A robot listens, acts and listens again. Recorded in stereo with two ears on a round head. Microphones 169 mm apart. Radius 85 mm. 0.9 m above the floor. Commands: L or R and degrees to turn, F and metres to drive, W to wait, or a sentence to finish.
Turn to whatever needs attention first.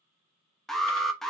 L30
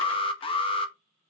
L145
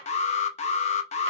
L40
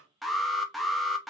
Found it: an alarm, straight ahead.